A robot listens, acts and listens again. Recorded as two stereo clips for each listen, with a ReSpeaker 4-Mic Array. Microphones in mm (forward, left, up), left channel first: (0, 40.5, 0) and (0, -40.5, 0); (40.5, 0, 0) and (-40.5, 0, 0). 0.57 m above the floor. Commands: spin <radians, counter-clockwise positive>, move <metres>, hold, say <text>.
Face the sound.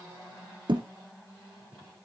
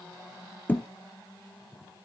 spin -1.22
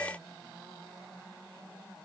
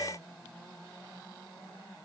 say I heard a thud from this way, but can't make it out now.